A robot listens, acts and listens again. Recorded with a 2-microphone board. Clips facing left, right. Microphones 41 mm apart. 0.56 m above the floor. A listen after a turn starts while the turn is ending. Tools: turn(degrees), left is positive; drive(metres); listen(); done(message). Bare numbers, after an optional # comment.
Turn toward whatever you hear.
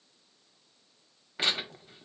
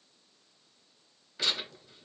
# The tearing paper: about 35° left or 145° left.
turn(35)
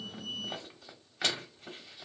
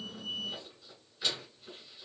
# So it is at 115° left.
turn(115)
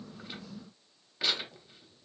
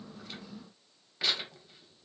done("Facing the tearing paper, under 1 m away.")